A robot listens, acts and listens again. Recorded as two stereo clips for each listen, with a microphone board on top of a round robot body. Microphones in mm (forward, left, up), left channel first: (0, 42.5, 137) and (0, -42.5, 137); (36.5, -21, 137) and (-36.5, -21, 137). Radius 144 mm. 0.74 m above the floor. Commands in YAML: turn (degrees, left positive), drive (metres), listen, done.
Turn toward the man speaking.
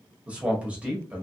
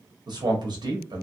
turn: -165
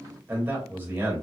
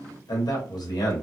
turn: -25
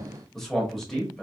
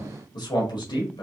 done: "Facing the man speaking, 1 to 2 m away."